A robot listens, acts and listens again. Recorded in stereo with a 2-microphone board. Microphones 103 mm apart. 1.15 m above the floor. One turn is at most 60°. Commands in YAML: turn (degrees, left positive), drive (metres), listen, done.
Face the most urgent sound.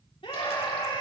turn: 60
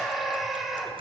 done: "Found it: a scream, straight ahead."